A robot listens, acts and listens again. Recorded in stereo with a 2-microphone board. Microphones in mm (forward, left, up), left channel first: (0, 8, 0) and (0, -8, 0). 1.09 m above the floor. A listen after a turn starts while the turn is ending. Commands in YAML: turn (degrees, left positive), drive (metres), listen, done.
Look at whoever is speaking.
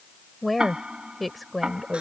turn: 30
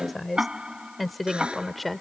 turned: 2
turn: 30
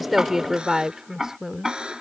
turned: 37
turn: -35
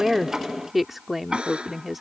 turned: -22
turn: -15
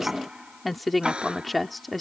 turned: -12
done: "Facing the woman speaking."